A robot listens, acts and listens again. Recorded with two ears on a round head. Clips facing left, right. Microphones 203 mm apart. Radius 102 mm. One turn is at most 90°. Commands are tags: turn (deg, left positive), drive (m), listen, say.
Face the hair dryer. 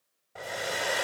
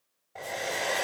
<turn deg="30"/>
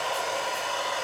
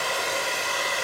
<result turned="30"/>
<turn deg="-25"/>
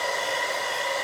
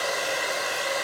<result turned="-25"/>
<turn deg="-10"/>
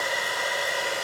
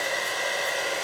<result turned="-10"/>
<say>Facing the hair dryer.</say>